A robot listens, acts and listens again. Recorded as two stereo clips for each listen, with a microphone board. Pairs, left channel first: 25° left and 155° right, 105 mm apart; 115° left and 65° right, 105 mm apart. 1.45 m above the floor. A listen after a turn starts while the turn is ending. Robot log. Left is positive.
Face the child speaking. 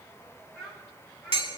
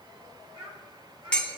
note: The child speaking: 60° right.
cmd yaw -60
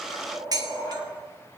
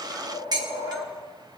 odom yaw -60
cmd idle
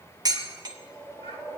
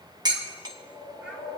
cmd idle
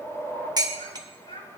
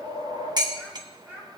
end: Found it: a child speaking, straight ahead.